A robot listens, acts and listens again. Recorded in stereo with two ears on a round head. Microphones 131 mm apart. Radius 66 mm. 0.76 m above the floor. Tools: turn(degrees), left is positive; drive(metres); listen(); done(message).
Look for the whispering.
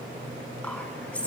turn(degrees=30)
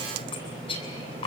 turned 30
turn(degrees=140)
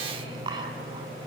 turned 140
turn(degrees=-30)
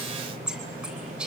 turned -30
done("Found it: whispering, straight ahead, over 4 m away.")